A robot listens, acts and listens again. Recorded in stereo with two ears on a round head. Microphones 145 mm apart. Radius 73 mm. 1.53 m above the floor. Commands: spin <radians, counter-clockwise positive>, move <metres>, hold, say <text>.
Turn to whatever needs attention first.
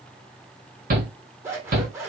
spin -1.05
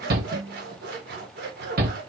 spin -1.05
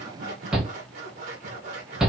say Found it: a shout, straight ahead.